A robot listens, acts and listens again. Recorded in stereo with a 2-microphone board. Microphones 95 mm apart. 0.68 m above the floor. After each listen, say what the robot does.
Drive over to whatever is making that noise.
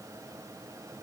Keep listening.
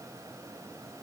Keep listening.
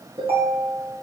Turn 90° right.
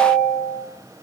Drive 1.0 m forward.
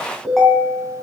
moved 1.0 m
Drive 1.0 m forward.
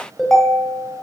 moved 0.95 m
Drive 1.0 m forward.
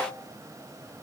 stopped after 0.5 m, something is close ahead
Keep listening.
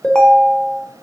Turn 10° left.
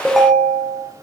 Arrived at the ringtone, straight ahead.